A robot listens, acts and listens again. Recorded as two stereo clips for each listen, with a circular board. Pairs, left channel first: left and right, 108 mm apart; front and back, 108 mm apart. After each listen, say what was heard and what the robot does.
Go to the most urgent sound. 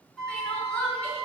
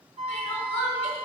The crying: 15° left. Turn 15° left.
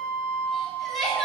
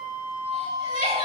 Drive 1.0 m forward.
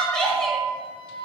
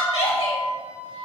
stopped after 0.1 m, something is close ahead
Blocked. The crying is further on, straight ahead.